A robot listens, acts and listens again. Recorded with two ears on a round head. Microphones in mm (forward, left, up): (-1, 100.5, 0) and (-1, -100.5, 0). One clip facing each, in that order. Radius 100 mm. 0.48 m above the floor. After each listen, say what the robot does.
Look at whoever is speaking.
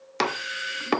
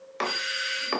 Keep listening.
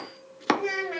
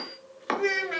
Turn 30° right.
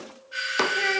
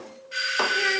Keep listening.
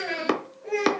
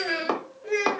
Turn 20° right.
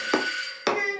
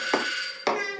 Turn 30° right.
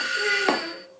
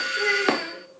Keep listening.
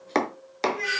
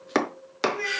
Facing the child speaking, 2 to 4 m away.